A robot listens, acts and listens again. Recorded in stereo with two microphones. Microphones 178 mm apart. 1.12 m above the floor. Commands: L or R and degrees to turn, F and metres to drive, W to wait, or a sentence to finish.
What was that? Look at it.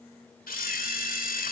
L55
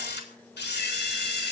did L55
L70
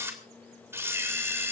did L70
R15
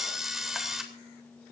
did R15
Facing the camera shutter, 2 to 4 m away.